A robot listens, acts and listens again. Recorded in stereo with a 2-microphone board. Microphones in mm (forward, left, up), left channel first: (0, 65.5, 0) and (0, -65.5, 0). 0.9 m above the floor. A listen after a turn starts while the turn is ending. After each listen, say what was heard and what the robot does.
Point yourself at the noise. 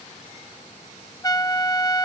The trumpet: about 25° left or 155° left. Turn 25° left.
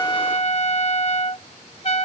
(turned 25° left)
So it is at 130° left. Turn 130° left.
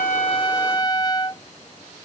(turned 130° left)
The trumpet is now 30° left. Turn 30° left.
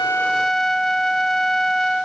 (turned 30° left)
Facing the trumpet.